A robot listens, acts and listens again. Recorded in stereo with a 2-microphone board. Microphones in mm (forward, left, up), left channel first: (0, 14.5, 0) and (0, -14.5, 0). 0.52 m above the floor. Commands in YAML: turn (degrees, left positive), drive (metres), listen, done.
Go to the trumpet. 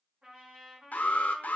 turn: -40
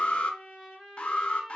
drive: 1.0
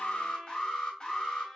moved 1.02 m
drive: 1.0
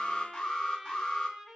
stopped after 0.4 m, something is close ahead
turn: -10
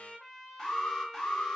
done: "Arrived at the trumpet, straight ahead."